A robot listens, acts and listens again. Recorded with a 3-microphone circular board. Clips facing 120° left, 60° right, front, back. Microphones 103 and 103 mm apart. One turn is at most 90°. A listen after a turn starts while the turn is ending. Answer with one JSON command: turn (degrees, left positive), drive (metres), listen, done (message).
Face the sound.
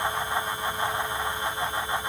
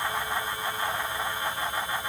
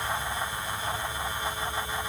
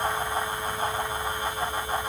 {"listen": true}
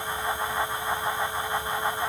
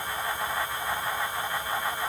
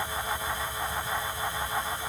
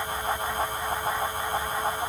{"listen": true}
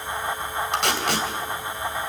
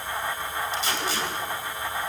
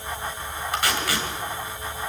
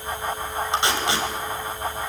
{"turn": 90}
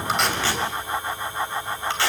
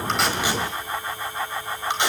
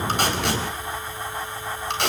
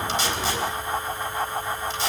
{"turn": 10}
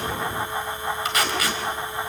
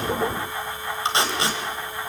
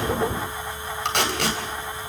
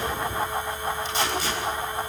{"done": "Facing the tape being pulled."}